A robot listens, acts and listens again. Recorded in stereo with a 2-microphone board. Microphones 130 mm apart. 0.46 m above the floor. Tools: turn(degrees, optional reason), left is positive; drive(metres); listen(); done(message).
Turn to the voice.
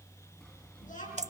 turn(degrees=90)
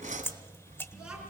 listen()
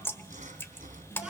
done("Found it: a child speaking, straight ahead.")